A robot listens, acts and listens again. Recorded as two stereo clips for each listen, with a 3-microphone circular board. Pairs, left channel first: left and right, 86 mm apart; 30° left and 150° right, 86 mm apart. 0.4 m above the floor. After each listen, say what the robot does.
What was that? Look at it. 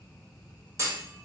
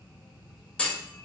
Turn 45° right.
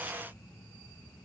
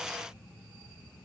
Facing where the clunk came from. I can't hear it now.